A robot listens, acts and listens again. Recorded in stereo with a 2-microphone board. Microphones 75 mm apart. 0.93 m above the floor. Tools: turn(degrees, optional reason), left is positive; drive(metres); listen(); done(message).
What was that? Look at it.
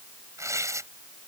turn(degrees=-45, reason="The tearing paper: about 45° right or 135° right.")
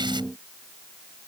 listen()
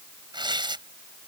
turn(degrees=-90, reason="So it is at 90° right.")
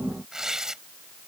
done("Found it: tearing paper, straight ahead.")